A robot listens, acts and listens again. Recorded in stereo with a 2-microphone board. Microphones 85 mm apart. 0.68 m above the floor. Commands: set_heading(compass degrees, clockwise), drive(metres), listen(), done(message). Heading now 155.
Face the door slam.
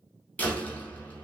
set_heading(135)
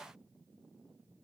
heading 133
listen()
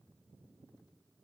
done("I heard a door slam, but can't make it out now. It was about 5° right or 140° left.")